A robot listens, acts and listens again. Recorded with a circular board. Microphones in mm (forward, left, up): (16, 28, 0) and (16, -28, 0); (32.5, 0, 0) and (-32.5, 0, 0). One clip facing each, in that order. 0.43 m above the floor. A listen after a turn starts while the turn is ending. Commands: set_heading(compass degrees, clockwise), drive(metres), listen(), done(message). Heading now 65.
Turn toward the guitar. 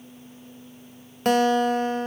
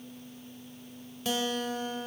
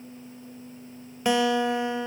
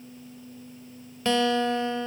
set_heading(350)
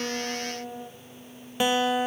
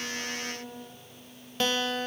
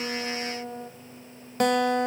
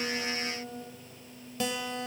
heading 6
set_heading(351)
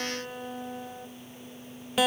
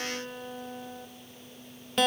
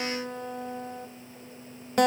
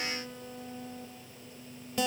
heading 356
done("Facing the guitar, 1 to 2 m away.")